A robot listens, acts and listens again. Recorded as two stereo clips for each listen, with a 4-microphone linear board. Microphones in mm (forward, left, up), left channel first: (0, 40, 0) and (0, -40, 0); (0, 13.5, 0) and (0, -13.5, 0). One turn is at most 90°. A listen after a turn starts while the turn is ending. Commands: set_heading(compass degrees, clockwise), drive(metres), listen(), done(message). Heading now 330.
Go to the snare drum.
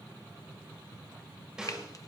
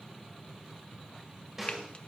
set_heading(0)
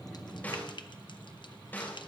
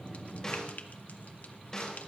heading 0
set_heading(335)
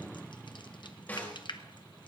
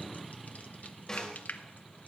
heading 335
set_heading(315)
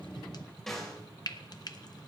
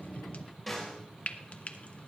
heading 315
drive(1.0)
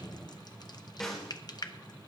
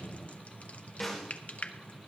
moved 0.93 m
drive(1.0)
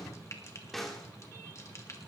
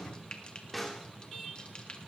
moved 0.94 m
drive(1.0)
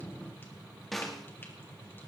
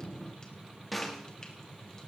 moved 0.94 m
drive(1.0)
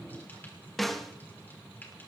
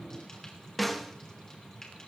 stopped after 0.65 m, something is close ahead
done("Arrived at the snare drum, straight ahead.")